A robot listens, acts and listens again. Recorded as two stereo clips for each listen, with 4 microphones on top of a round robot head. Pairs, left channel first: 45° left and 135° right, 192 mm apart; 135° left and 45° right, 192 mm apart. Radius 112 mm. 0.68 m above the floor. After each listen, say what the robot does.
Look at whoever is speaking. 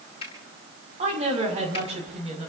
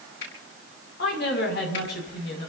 Turn 170° left.
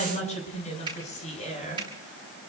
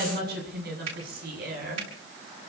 Turn 10° right.
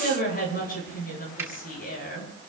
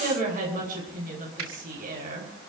Facing the woman speaking.